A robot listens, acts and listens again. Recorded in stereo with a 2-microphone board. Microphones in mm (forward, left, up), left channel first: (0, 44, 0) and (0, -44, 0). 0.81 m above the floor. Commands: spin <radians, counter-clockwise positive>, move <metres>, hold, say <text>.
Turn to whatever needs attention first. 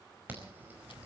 spin -0.35
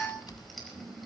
say Facing the alarm.